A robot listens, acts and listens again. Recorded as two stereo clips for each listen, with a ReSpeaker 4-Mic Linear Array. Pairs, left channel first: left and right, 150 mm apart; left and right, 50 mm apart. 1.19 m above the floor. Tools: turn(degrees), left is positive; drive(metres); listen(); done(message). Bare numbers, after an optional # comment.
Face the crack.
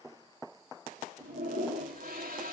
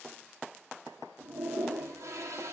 listen()
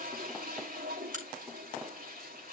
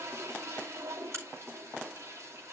# The crack: about 60° right or 120° right.
turn(-60)
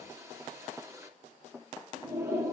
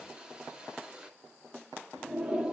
listen()
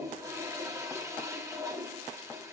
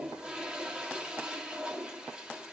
done("I heard a crack, but can't make it out now. It was about straight ahead or 60° right.")